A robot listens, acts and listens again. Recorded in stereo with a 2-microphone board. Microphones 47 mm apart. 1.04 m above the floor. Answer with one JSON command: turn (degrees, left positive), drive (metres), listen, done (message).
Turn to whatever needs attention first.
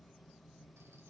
{"listen": true}
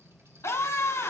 {"turn": 90}
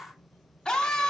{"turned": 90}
{"turn": 10}
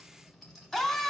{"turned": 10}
{"done": "Found it: a scream, straight ahead, 2 to 4 m away."}